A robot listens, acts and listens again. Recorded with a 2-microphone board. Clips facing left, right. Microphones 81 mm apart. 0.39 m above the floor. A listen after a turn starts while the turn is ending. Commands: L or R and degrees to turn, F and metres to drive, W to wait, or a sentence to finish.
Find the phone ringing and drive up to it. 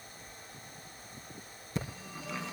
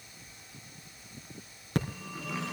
R70
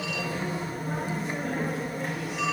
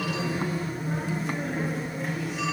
F1.0
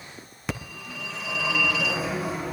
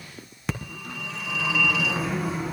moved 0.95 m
F1.0
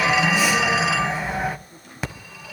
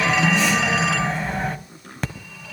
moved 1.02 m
F1.0
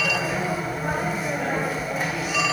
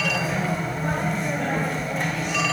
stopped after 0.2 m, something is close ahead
I am next to the phone ringing.